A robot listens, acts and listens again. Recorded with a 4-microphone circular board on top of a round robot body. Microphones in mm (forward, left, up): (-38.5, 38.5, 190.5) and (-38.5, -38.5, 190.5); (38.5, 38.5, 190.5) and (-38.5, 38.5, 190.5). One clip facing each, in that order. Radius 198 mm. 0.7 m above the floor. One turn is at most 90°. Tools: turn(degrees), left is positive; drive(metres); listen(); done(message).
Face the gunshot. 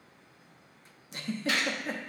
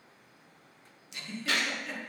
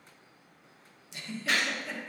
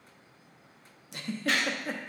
turn(degrees=-80)
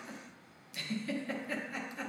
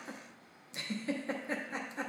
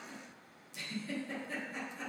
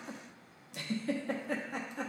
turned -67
turn(degrees=-15)
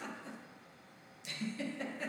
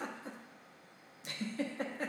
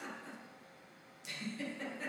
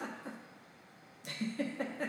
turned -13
done("I heard a gunshot from this way, but can't make it out now.")